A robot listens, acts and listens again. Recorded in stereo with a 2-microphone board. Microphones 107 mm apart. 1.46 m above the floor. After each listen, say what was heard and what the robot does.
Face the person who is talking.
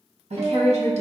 The woman speaking: about 75° right or 105° right. Turn 75° right.
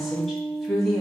Facing the woman speaking.